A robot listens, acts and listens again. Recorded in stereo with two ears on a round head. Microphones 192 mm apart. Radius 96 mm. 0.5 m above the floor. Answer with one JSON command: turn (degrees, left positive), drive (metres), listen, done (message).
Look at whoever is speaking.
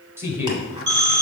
{"turn": -30}
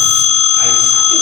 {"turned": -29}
{"listen": true}
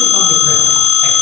{"listen": true}
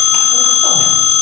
{"done": "I heard a man speaking, but can't make it out now. It was about 15° left or 140° right."}